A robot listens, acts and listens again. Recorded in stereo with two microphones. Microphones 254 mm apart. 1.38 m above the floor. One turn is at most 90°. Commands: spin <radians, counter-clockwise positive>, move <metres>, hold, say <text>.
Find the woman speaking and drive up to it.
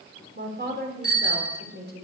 spin -0.70
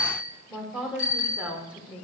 move 1.0
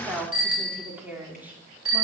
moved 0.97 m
move 1.0
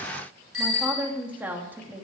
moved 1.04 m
move 1.0
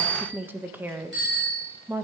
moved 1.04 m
spin -0.17
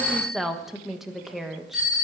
move 1.0
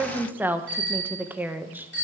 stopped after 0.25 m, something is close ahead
say I am next to the woman speaking.